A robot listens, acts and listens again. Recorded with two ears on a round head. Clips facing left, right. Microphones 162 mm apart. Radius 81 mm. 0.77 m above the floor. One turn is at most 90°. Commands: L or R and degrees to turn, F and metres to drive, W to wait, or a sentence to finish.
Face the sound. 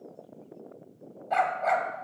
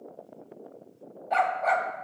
L30
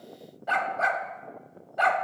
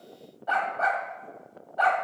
L90
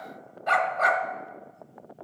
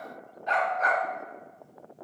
L90
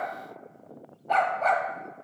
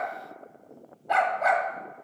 R10
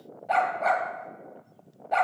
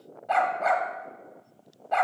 Facing the dog barking.